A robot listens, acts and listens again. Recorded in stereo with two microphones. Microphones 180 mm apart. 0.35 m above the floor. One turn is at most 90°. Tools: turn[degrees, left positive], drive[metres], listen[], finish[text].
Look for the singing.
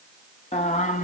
Thought: The singing: about 45° left or 135° left.
Action: turn[45]
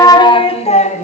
Thought: So it is at 45° left.
Action: turn[45]
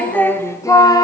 Thought: The singing is now 20° left.
Action: turn[20]
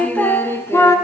Thought: The singing is now 15° left.
Action: turn[15]
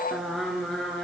Action: finish[Facing the singing, 2 to 4 m away.]